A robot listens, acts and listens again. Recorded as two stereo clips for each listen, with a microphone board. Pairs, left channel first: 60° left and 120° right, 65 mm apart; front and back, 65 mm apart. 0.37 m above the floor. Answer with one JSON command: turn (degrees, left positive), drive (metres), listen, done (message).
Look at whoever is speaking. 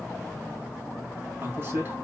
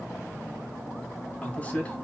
{"turn": -65}
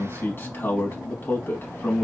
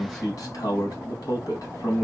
{"turn": 10}
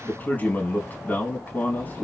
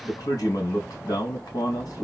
{"done": "Found it: a man speaking, straight ahead, 2 to 4 m away."}